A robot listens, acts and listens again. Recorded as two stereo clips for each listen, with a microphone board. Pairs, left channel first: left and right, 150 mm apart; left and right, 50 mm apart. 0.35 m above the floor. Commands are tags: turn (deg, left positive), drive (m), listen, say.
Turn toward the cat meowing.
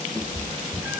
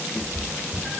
<turn deg="-30"/>
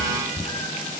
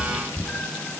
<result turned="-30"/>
<turn deg="20"/>
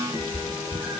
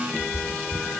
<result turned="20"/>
<turn deg="-10"/>
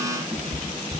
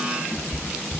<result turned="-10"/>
<turn deg="-10"/>
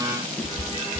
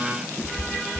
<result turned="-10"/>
<say>Found it: a cat meowing, straight ahead.</say>